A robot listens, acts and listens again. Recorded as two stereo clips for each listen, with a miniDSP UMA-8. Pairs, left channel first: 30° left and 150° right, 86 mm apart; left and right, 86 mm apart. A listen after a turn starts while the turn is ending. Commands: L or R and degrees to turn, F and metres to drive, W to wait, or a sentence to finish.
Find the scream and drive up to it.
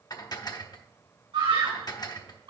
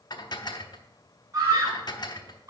R140
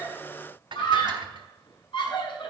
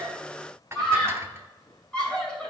L10
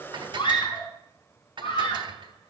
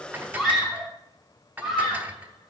F1.0
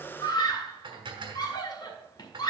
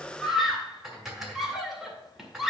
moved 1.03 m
F1.0
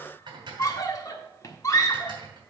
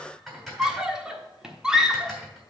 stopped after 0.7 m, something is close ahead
R10
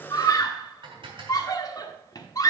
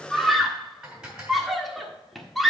I am next to the scream.